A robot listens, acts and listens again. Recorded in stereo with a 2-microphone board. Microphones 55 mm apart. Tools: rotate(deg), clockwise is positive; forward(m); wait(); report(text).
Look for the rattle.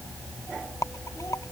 rotate(-90)
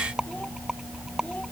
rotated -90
rotate(10)
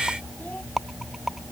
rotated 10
report("Facing the rattle.")